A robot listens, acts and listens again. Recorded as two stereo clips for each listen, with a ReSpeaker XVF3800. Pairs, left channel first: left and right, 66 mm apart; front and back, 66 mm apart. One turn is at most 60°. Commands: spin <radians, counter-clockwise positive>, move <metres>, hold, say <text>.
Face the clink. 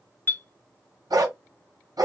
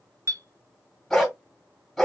spin 1.05
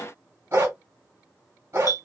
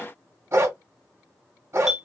spin 1.05
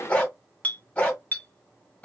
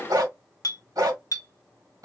spin 0.44
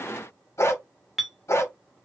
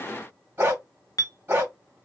say Facing the clink, under 1 m away.